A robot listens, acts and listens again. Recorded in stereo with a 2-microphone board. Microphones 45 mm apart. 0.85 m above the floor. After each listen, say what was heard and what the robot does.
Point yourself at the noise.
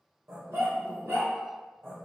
The dog barking: about 65° right or 115° right. Turn 65° right.
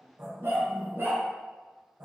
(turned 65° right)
So it is at 75° right. Turn 75° right.
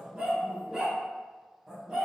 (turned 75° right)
The dog barking is now 15° right. Turn 15° right.
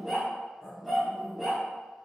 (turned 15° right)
Facing the dog barking.